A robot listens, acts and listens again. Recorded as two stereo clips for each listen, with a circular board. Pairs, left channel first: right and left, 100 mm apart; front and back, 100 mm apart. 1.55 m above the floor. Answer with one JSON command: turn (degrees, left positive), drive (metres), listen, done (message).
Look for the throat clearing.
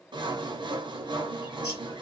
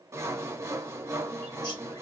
{"listen": true}
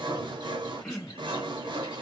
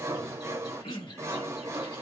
{"done": "Found it: throat clearing, straight ahead."}